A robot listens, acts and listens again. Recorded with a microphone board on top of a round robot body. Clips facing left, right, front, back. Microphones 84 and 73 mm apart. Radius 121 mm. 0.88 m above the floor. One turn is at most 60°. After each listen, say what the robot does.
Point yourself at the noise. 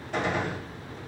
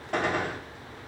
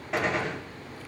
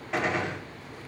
Turn 60° right.
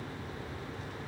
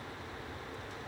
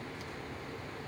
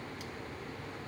Turn 30° right.
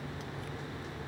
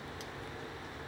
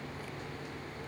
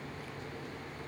I heard a gunshot from this way, but can't make it out now.